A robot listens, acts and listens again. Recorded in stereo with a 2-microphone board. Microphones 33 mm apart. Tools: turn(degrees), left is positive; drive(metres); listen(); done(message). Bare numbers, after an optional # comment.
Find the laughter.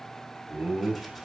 # The laughter: about 35° right or 145° right.
turn(-35)
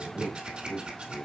# So it is at 10° left.
turn(10)
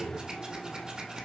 listen()
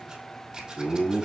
# The laughter is now 10° left.
turn(10)
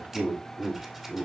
done("Found it: laughter, straight ahead.")